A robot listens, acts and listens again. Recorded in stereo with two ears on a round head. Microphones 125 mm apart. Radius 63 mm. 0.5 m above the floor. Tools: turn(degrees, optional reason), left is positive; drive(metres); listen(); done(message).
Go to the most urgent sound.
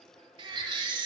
turn(degrees=-40, reason="The baby crying: about 40° right or 140° right.")
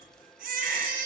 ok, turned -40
turn(degrees=-100, reason="So it is at 100° right.")
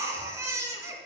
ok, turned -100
turn(degrees=-20, reason="The baby crying is now 20° right.")
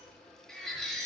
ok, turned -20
drive(metres=1.0)
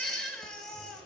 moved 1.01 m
drive(metres=1.0)
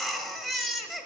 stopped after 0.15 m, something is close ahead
done("Arrived at the baby crying, straight ahead.")